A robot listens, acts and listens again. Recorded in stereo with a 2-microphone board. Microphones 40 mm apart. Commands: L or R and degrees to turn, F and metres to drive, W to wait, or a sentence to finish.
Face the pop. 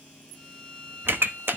R65
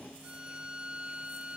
W
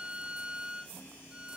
I heard a pop, but can't make it out now. It was about straight ahead or 50° right.